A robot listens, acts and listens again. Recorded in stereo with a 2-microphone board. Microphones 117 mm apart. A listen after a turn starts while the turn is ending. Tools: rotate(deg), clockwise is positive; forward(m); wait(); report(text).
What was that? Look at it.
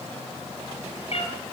rotate(-65)
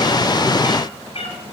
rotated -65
rotate(-55)
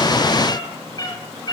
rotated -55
rotate(-35)
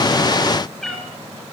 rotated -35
report("Facing the cat meowing.")